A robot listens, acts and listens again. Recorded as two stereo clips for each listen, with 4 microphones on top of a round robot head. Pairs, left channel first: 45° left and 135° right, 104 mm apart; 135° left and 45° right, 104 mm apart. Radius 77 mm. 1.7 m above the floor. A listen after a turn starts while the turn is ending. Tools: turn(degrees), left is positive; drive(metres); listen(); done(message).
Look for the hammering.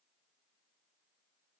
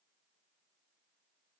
listen()
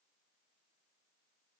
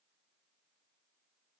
listen()
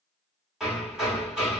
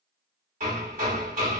turn(degrees=-50)
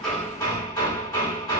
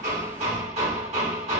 turn(degrees=-15)
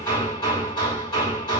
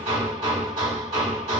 done("Facing the hammering.")